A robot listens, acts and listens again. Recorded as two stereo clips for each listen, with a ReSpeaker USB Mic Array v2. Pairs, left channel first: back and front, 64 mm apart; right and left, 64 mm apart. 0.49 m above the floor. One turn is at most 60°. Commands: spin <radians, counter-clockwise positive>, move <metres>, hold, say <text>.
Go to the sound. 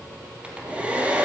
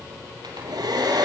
spin 1.05
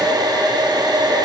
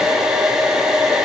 spin 0.17
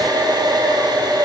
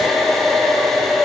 move 1.0
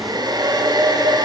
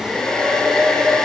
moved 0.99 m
spin -0.17
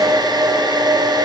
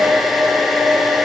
move 1.0
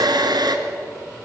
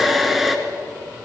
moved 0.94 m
move 1.0
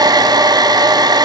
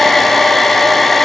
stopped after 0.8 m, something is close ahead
say Arrived at the hair dryer, straight ahead.